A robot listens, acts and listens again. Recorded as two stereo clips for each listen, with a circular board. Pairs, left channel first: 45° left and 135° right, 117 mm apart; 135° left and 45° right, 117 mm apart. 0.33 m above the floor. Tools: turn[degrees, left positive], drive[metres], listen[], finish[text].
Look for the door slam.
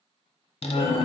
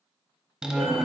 Thought: The door slam: 40° left.
Action: turn[40]
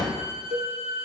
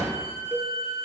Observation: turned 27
Thought: The door slam is now 10° left.
Action: turn[10]
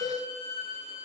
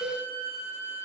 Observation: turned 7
Action: finish[Facing where the door slam came from. I can't hear it now.]